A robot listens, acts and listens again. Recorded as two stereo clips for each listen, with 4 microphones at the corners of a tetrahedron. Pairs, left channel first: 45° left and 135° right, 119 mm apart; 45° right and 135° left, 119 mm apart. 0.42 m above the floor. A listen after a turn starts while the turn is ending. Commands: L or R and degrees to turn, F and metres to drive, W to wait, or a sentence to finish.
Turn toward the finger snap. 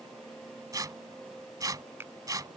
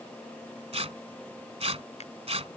R65
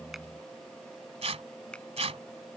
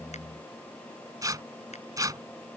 W
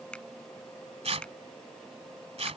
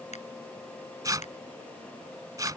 R35
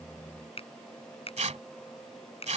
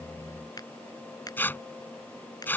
L10
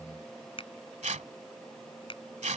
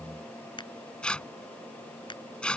Facing the finger snap.